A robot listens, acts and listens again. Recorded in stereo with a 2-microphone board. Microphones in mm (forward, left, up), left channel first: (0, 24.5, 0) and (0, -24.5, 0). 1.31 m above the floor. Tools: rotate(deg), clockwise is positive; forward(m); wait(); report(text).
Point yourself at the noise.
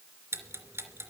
rotate(60)
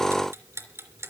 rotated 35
rotate(75)
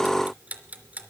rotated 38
rotate(35)
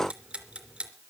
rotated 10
rotate(25)
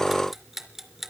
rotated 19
report("Found it: ticking, straight ahead.")